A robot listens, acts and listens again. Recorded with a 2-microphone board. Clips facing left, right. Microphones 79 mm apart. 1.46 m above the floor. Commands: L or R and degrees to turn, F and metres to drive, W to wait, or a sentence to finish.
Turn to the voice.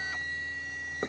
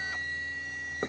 W
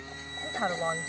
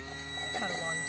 L40
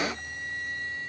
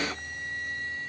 W
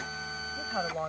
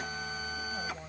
L100
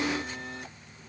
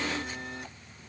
W
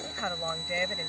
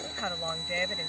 Found it: a woman speaking, straight ahead.